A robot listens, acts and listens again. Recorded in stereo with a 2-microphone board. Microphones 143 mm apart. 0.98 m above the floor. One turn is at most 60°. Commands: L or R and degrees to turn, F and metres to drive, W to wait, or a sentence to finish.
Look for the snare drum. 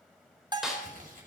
L30
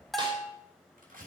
W
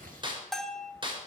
R35
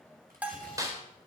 R25
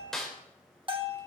Facing the snare drum.